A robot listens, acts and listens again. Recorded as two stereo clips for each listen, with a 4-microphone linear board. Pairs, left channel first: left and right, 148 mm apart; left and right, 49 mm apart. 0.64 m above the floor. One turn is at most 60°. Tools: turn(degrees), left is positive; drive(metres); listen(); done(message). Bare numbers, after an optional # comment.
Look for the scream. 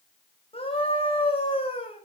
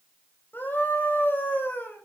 # The scream: about 40° left or 140° left.
turn(40)
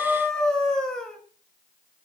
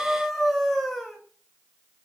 done("Found it: a scream, straight ahead, over 4 m away.")